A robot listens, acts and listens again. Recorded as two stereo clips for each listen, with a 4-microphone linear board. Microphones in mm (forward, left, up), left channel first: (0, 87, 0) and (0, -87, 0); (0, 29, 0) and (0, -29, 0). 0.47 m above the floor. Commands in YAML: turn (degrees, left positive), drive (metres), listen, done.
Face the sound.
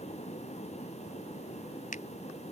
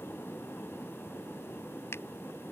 turn: 50
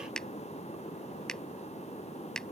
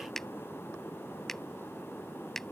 done: "Facing the finger snap."